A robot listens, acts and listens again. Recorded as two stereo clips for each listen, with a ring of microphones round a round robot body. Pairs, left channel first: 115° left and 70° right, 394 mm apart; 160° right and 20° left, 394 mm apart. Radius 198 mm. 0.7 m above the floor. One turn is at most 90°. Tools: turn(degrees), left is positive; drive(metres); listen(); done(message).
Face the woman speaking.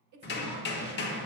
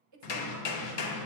turn(degrees=-25)
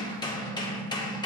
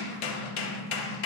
listen()
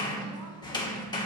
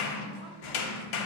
listen()
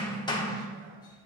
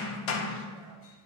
done("I heard a woman speaking from this way, but can't make it out now.")